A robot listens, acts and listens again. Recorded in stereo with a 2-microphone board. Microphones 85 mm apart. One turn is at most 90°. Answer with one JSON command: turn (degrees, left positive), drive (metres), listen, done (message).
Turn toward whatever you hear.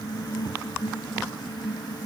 {"listen": true}
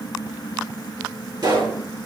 {"turn": -55}
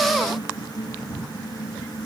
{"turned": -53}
{"listen": true}
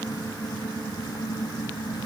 {"done": "I heard a pop, but can't make it out now. It was about 5° right or 70° right."}